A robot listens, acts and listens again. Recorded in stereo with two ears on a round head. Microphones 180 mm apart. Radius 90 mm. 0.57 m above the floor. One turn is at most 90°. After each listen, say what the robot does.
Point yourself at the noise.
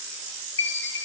Turn 60° left.
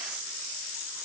Keep listening.
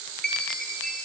Facing the chime, under 1 m away.